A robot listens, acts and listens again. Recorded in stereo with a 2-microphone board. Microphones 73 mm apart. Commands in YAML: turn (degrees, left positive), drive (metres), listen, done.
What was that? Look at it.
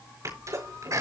turn: -45
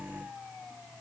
listen: true
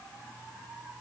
done: "I heard a sneeze, but can't make it out now. It was about straight ahead or 90° right."